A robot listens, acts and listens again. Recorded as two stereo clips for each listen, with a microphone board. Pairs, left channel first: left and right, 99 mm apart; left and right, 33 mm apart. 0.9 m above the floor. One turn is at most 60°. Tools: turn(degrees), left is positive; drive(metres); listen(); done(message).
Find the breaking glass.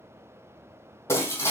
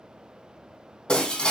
turn(degrees=30)
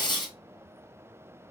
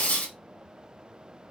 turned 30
turn(degrees=60)
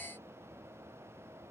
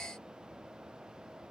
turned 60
turn(degrees=55)
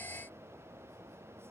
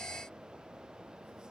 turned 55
done("I heard breaking glass from this way, but can't make it out now.")